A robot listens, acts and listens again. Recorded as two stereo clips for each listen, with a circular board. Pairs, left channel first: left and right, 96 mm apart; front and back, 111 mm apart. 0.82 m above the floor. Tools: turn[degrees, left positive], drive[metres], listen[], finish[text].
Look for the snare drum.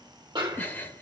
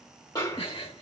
Thought: The snare drum: 55° right.
Action: turn[-55]
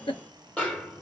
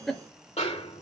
Thought: The snare drum is now 10° left.
Action: turn[10]
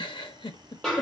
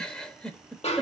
Action: finish[Found it: a snare drum, straight ahead.]